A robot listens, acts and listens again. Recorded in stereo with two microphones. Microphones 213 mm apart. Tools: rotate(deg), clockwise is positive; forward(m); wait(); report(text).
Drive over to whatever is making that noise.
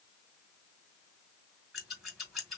rotate(-30)
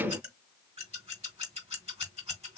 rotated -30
rotate(30)
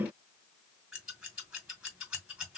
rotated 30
forward(1.0)
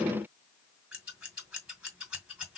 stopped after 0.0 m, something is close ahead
report("Blocked. The scissors is further on, straight ahead.")